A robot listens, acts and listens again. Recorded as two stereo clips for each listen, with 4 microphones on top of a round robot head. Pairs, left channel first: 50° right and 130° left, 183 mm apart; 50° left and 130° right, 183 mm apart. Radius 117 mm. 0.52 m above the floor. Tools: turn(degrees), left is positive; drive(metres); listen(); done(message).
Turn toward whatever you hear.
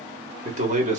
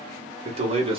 turn(degrees=175)
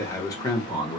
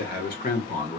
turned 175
turn(degrees=10)
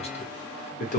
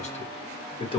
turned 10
turn(degrees=-10)
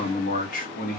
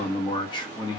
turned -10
turn(degrees=-15)
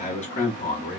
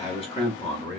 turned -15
turn(degrees=-10)
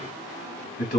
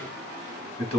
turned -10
done("Facing the man speaking, 1 to 2 m away.")